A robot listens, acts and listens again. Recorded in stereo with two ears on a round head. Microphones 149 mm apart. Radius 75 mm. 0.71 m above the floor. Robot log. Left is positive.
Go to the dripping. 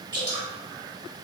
note: The dripping: about 25° right or 155° right.
cmd yaw -25
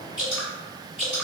cmd fwd 1.0
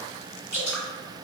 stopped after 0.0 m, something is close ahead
note: The dripping is now 10° right.
cmd yaw -10
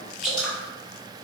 end: Blocked. The dripping is further on, straight ahead.